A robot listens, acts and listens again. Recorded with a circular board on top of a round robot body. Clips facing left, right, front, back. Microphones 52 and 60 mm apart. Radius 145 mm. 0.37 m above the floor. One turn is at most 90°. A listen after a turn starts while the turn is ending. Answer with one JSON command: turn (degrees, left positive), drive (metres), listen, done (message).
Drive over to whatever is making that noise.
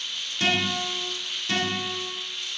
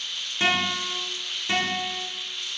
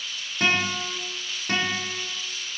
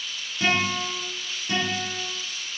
{"turn": -25}
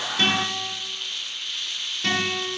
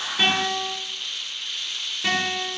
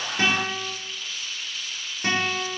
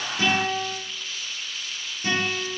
{"turn": -10}
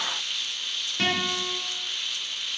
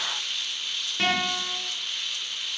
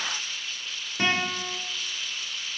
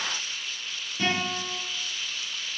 {"drive": 1.0}
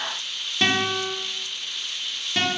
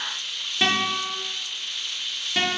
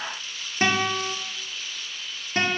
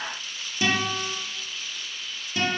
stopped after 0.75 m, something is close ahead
{"done": "I am next to the guitar."}